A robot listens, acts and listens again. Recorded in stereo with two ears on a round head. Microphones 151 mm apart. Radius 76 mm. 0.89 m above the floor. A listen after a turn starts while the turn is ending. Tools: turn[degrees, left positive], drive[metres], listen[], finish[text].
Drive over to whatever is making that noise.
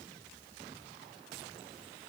Action: listen[]
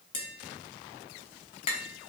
Thought: The tapping: about 35° left or 145° left.
Action: turn[35]
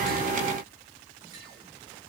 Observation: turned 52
Action: listen[]
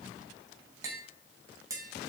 Thought: So it is at 20° right.
Action: turn[-20]
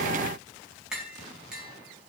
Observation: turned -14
Action: drive[1.0]
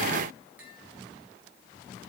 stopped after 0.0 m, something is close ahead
Action: listen[]
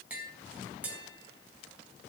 Thought: The tapping is now 10° right.
Action: turn[-10]
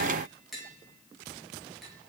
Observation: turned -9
Action: finish[Something is in my way. I am facing the tapping but have not reached it.]